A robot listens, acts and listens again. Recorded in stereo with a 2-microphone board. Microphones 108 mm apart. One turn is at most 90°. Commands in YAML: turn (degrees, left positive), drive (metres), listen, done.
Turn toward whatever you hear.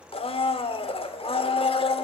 turn: 60
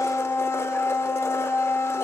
turn: 30
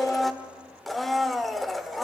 done: "Facing the blender."